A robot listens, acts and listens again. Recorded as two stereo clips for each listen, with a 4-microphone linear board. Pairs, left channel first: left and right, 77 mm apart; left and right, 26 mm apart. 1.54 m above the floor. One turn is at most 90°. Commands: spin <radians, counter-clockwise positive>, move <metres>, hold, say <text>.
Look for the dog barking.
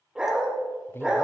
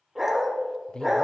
spin -0.52
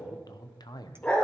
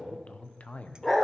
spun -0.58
spin 0.35
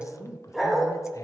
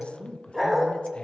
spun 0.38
say Found it: a dog barking, straight ahead.